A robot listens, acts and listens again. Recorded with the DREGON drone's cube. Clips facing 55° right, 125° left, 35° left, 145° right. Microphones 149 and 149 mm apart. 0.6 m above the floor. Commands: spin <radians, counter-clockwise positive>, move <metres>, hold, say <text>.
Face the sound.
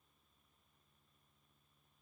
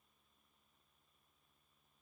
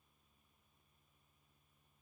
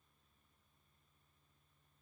hold
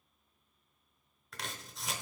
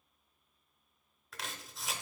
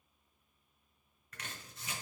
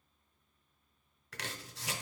spin -2.53
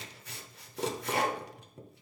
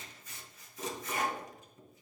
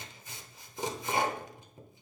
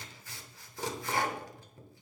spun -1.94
spin -0.61
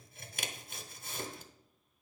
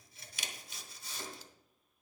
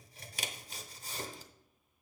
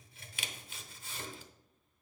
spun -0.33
spin -0.35
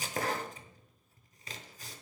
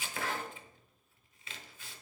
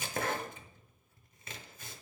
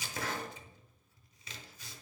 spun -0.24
say Facing the chopping.